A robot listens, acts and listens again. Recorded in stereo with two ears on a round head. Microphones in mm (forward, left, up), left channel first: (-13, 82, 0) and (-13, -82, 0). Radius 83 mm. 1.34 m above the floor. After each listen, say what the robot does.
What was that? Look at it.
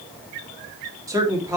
Turn 15° right.
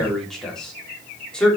Turn 30° left.
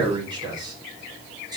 Turn 25° right.
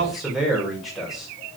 Facing the man speaking.